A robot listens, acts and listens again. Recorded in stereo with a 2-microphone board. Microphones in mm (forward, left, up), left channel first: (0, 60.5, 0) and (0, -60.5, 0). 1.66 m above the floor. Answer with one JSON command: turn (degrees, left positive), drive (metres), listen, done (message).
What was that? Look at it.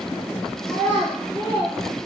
{"turn": -45}
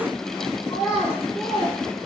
{"done": "Facing the child speaking, 1 to 2 m away."}